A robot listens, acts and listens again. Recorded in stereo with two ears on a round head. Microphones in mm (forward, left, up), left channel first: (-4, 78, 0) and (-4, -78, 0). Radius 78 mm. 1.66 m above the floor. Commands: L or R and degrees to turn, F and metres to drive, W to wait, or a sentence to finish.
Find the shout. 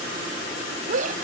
R45
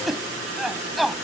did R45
Facing the shout.